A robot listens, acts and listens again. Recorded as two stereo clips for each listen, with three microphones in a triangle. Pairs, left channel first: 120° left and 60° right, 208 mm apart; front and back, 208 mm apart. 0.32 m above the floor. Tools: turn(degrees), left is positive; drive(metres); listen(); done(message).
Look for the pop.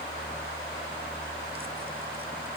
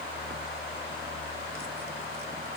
listen()
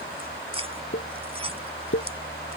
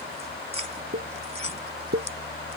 turn(degrees=140)
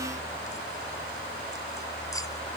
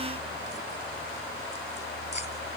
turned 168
turn(degrees=-30)
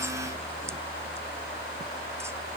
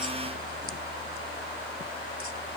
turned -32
done("Facing where the pop came from. I can't hear it now.")